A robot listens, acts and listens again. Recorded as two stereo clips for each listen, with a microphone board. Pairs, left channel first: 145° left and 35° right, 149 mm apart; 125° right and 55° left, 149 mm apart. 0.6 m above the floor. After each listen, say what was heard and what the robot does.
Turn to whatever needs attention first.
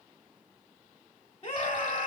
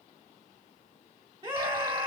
The scream: 105° left. Turn 105° left.
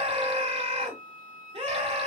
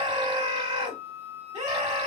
Facing the scream, 1 to 2 m away.